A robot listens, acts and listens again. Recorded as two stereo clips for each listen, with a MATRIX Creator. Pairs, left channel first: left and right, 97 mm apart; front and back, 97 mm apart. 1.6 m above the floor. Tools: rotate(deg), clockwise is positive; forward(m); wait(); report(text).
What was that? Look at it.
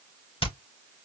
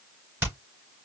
rotate(-115)
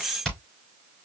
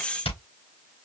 report("Found it: hammering, straight ahead, 2 to 4 m away.")